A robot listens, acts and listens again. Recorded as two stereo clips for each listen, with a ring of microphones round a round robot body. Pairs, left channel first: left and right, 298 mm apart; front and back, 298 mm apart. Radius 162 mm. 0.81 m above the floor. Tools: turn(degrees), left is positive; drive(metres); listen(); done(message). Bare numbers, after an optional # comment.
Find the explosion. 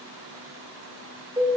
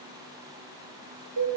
listen()
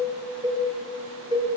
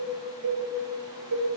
listen()
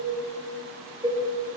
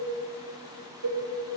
done("I can't make out an explosion to turn to.")